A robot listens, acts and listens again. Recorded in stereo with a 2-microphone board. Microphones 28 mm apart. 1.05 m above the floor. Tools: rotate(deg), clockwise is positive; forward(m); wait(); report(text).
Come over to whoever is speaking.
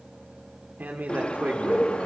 rotate(90)
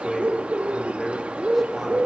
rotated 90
rotate(10)
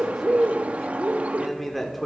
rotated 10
forward(1.0)
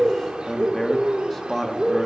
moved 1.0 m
forward(1.0)
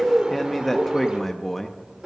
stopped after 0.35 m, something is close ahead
report("I am next to the man speaking.")